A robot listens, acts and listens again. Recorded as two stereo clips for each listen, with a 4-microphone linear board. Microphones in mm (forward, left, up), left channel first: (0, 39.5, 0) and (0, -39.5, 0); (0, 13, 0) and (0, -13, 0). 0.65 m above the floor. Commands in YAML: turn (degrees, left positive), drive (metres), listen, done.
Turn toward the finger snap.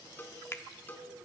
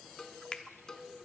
turn: 35
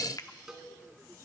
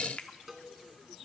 turn: 105
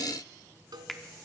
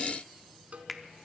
done: "Found it: a finger snap, straight ahead, 1 to 2 m away."